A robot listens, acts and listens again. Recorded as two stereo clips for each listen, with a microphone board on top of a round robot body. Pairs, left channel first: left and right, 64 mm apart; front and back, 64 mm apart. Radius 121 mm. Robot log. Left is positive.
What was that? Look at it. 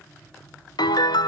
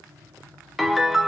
note: The piano: 95° left.
cmd yaw +95
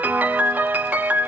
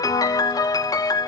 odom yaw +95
note: The piano is now 25° right.
cmd yaw -25
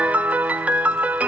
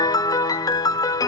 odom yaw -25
note: The piano is now 20° right.
cmd yaw -20
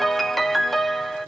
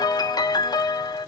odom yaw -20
end: Found it: a piano, straight ahead, 1 to 2 m away.